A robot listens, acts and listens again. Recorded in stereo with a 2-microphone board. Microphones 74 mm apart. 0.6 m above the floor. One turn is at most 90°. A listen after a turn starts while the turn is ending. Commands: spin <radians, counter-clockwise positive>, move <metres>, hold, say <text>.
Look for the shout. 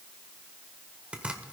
hold
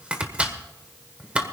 hold
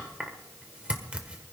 say I can't make out a shout, only chopping.